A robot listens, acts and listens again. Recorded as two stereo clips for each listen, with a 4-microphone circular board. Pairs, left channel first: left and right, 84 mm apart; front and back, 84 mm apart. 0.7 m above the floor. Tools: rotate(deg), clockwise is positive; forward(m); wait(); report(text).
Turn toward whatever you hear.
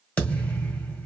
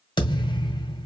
rotate(-20)
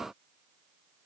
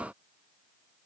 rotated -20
report("Facing where the thud came from. I can't hear it now.")